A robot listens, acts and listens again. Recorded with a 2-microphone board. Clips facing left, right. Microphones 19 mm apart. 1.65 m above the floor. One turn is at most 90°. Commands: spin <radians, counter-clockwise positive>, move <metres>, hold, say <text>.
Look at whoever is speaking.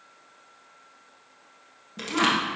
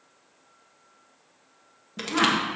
spin 0.52
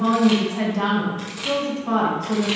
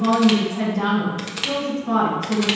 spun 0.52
spin 1.57
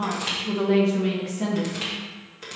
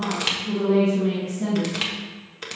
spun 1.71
spin 0.87
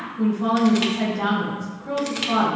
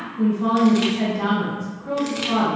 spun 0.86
say Facing the woman speaking, 1 to 2 m away.